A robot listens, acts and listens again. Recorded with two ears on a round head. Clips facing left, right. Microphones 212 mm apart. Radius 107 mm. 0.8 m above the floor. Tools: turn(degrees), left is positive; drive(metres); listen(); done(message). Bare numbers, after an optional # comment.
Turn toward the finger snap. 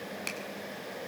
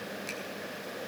turn(90)
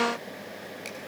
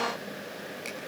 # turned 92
done("Facing the finger snap, over 4 m away.")